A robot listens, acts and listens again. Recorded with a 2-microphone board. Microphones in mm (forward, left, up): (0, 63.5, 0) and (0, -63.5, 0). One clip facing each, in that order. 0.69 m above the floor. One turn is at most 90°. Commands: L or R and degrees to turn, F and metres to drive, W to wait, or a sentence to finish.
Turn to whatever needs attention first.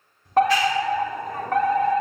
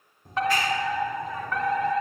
L55
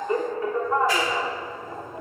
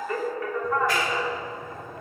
L30
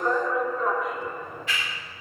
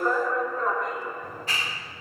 Facing the fire alarm.